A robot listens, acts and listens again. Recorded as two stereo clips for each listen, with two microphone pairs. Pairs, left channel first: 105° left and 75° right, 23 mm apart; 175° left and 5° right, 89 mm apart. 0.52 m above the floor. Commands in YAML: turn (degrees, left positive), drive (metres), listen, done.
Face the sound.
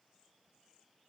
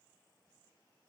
listen: true
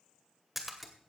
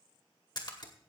turn: -155
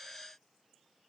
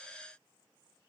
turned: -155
done: "Facing where the splash came from. I can't hear it now."